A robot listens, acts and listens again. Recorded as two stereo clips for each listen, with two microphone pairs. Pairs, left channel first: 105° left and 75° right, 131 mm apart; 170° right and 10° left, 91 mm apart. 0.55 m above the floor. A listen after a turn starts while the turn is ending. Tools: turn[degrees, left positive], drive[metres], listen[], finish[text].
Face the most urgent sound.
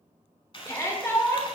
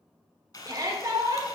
Thought: The shout: 45° left.
Action: turn[45]
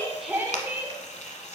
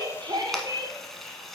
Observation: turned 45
Action: finish[Facing the shout.]